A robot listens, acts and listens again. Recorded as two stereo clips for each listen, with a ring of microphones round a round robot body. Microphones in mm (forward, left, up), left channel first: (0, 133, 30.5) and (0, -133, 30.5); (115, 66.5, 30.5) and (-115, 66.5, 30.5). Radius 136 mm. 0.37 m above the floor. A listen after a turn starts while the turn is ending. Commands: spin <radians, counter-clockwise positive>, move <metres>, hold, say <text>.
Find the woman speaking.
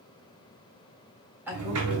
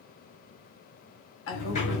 spin -0.17
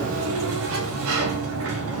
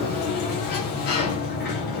hold
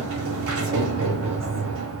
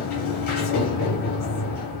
hold
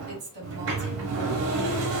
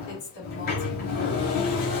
spin -0.70
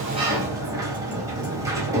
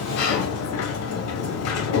hold
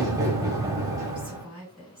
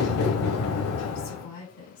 say Facing the woman speaking, 2 to 4 m away.